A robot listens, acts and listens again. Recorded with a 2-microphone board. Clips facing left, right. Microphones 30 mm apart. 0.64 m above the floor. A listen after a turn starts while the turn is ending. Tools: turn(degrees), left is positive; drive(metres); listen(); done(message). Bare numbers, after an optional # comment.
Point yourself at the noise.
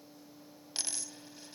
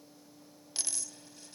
turn(30)
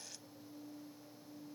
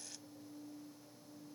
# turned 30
listen()
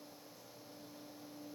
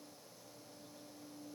done("I heard a dropped coin, but can't make it out now. It was about 15° right or 135° left.")